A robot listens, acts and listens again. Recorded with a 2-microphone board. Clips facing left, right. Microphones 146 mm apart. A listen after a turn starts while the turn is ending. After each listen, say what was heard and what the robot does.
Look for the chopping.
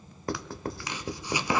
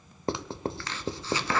Turn 30° left.
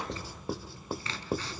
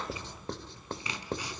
So it is at 15° right. Turn 15° right.
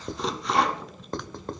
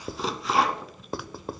Found it: chopping, straight ahead, under 1 m away.